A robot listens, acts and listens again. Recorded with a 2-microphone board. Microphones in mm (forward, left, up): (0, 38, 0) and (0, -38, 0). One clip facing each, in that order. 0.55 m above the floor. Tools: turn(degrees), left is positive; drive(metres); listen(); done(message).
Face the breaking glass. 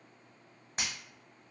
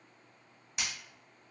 turn(degrees=40)
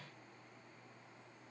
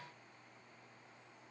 listen()
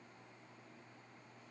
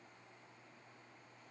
done("I heard breaking glass, but can't make it out now. It was about straight ahead or 100° left.")